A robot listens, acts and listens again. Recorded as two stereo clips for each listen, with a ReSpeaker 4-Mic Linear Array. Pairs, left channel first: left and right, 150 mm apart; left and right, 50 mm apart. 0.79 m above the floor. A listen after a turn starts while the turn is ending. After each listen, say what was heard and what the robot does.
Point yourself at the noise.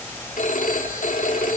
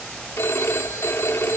The phone ringing: about 60° left or 120° left. Turn 60° left.
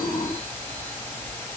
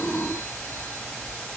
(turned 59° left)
Keep listening.
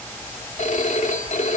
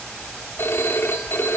So it is at 60° left. Turn 60° left.
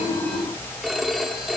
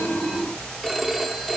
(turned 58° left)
Facing the phone ringing.